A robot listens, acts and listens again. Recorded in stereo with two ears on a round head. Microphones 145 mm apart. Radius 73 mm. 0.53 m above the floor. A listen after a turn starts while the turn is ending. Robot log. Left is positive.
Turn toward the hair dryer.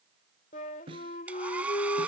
cmd yaw -30
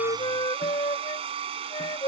note: So it is at 140° right.
cmd yaw -140
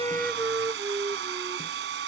note: The hair dryer is now 80° right.
cmd yaw -80
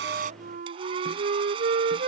note: The hair dryer is now 30° right.
cmd yaw -30
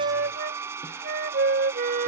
note: The hair dryer is now 15° right.
cmd yaw -15
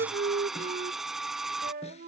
end: Found it: a hair dryer, straight ahead.